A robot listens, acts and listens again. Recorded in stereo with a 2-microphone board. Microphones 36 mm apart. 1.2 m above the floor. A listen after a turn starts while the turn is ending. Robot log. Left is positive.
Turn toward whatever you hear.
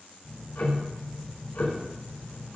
note: The ticking: about 65° left or 115° left.
cmd yaw +65
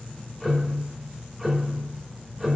end: Found it: ticking, straight ahead, over 4 m away.